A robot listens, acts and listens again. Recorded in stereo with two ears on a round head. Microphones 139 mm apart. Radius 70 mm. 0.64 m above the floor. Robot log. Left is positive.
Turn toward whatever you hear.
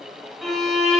cmd yaw +30
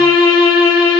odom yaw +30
note: So it is at 150° left.
cmd yaw +150
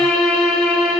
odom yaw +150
end: Facing the violin, 1 to 2 m away.